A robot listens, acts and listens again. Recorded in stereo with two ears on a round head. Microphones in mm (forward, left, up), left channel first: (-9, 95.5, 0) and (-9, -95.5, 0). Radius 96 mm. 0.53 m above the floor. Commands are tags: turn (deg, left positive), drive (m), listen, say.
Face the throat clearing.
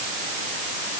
<listen/>
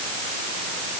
<listen/>
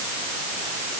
<say>I can't make out throat clearing.</say>